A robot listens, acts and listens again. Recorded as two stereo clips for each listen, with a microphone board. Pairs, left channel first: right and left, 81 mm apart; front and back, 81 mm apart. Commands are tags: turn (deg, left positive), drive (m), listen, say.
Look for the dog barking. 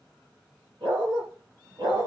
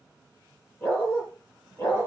<turn deg="55"/>
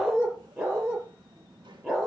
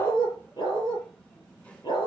<say>Found it: a dog barking, straight ahead, over 4 m away.</say>